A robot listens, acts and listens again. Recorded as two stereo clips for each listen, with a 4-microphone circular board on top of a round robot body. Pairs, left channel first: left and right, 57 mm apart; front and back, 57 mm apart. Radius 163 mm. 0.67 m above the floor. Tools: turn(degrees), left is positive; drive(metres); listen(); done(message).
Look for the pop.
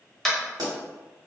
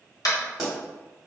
turn(degrees=-95)
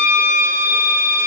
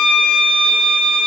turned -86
turn(degrees=-10)
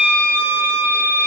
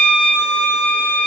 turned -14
done("I heard a pop from this way, but can't make it out now.")